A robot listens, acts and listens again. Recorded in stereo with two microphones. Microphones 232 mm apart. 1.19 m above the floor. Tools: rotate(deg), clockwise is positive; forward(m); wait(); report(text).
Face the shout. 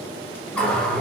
wait()
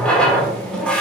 wait()
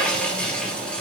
report("I can't make out a shout to turn to.")